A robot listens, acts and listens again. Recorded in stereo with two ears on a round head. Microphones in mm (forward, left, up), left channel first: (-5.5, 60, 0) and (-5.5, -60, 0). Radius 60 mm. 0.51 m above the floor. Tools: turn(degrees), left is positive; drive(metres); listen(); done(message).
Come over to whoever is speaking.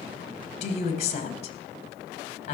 turn(degrees=50)
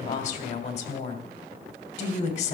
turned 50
turn(degrees=65)
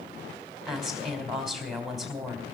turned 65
drive(metres=1.0)
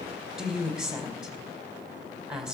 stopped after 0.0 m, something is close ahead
done("Something is in my way. I am facing the woman speaking but have not reached it.")